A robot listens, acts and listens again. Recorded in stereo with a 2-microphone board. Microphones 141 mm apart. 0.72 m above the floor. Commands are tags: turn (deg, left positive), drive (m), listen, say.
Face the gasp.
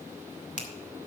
<listen/>
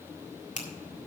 <listen/>
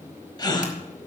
<turn deg="30"/>
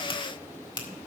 <listen/>
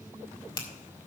<say>I heard a gasp, but can't make it out now. It was about straight ahead or 120° left.</say>